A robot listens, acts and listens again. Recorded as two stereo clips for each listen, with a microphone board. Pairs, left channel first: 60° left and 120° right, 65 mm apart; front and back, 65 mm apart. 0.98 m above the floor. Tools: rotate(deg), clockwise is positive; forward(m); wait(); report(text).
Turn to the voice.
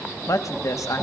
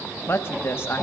rotate(-45)
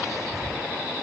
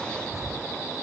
wait()
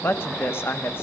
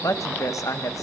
rotate(-15)
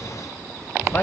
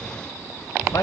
wait()
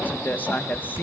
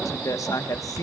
report("Facing the woman speaking, under 1 m away.")